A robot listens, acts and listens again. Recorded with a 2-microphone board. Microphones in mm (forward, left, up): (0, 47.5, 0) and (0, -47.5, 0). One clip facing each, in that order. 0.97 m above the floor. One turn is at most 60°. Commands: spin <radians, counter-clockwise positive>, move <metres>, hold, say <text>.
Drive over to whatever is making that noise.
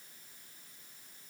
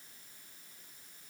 hold
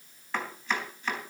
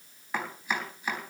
spin -0.52
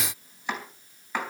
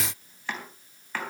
spin 0.35
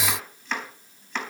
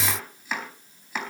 move 1.0
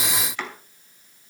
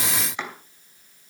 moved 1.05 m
spin -0.35
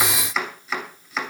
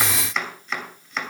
move 1.0
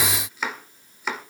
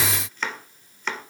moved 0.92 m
spin 0.17
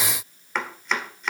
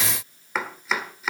move 1.0
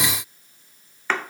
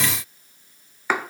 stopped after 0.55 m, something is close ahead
spin -0.17
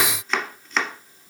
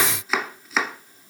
say Arrived at the chopping, straight ahead.